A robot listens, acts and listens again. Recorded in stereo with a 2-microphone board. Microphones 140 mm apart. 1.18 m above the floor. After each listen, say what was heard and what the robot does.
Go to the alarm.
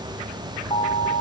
The alarm: about 55° left or 125° left. Turn 55° left.
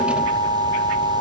So it is at 65° left. Turn 65° left.
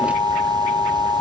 The alarm is now 20° left. Turn 20° left.
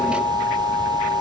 Drive 1.0 m forward.
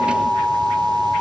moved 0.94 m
Drive 1.0 m forward.
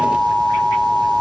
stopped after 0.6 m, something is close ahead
The alarm is now 10° left. Turn 10° left.
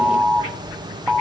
Arrived at the alarm, straight ahead.